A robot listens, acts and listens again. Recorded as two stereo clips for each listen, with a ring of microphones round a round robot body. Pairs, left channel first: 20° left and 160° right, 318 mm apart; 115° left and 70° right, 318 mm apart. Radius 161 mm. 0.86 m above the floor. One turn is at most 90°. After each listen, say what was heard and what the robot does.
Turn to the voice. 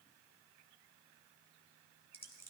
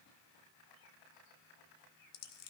Keep listening.
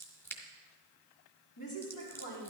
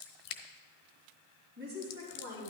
The woman speaking: 10° right. Turn 10° right.
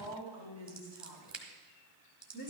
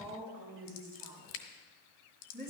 Facing the woman speaking.